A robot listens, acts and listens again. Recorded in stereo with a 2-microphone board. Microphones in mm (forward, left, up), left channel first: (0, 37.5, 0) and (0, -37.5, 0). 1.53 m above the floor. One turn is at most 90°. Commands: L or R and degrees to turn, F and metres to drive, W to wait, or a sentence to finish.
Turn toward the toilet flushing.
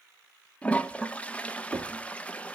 L15
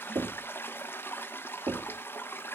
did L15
L90
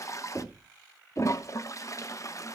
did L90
L50
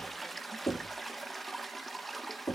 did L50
Found it: a toilet flushing, straight ahead, 1 to 2 m away.